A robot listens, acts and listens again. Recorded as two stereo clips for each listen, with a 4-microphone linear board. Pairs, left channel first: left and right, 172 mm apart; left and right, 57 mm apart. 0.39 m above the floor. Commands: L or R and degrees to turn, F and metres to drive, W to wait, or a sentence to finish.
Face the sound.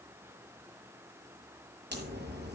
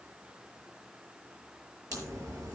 R90
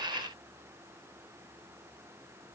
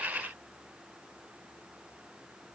I heard a crack from this way, but can't make it out now.